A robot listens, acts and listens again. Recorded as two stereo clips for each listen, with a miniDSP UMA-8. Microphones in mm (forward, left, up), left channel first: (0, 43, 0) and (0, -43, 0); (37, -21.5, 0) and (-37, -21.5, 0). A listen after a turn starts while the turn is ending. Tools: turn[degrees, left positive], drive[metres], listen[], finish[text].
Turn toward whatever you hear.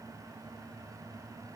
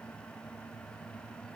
Action: listen[]
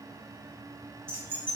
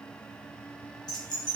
Thought: The keys jangling: 25° right.
Action: turn[-25]
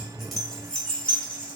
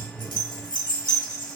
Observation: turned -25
Thought: The keys jangling is now 15° left.
Action: turn[15]
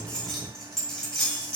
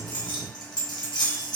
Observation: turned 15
Thought: The keys jangling is now 10° left.
Action: turn[10]
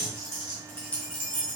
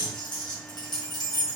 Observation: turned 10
Thought: The keys jangling is now 10° left.
Action: turn[10]
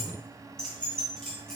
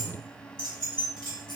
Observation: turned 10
Action: finish[Facing the keys jangling, 2 to 4 m away.]